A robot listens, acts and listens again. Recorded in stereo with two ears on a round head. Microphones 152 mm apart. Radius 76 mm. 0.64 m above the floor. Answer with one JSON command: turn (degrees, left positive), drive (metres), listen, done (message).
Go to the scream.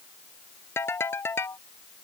{"listen": true}
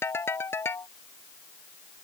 {"listen": true}
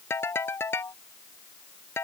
{"done": "I can't make out a scream to turn to."}